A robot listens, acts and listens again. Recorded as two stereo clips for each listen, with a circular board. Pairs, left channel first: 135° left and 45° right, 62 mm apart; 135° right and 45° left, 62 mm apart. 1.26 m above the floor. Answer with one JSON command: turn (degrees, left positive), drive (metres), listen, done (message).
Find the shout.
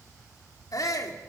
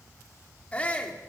{"turn": 155}
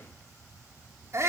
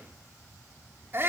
{"done": "Facing the shout."}